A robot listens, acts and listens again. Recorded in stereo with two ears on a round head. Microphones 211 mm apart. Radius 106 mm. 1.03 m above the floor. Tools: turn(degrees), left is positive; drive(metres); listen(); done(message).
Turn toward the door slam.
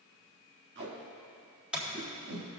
turn(degrees=-30)
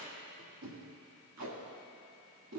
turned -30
listen()
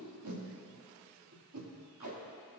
done("I heard a door slam, but can't make it out now. It was about 25° left or 145° right.")